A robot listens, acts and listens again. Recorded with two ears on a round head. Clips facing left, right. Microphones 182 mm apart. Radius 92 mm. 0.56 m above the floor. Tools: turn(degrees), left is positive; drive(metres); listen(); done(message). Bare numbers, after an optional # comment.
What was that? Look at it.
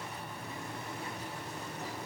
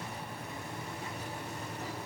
listen()
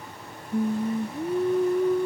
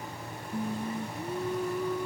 # The singing: about 20° left or 160° left.
turn(20)
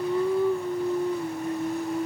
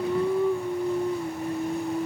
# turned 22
done("Facing the singing.")